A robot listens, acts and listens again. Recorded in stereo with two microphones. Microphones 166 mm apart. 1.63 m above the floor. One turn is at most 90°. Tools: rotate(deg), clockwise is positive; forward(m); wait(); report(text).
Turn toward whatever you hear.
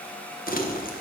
rotate(-65)
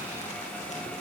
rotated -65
wait()
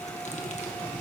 rotate(-50)
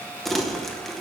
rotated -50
report("Facing the crumpling, 1 to 2 m away.")